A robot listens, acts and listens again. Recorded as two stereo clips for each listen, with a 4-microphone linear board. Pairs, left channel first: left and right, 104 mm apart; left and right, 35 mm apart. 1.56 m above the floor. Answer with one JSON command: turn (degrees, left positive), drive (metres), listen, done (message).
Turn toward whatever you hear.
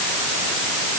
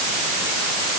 {"listen": true}
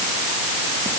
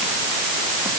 {"listen": true}
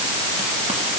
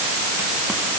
{"done": "I can't make out anything to turn to."}